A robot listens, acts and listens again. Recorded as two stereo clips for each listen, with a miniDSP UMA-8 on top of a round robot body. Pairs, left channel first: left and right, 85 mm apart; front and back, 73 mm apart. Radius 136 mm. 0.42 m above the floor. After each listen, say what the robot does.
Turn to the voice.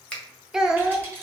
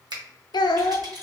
Found it: a child speaking, straight ahead, under 1 m away.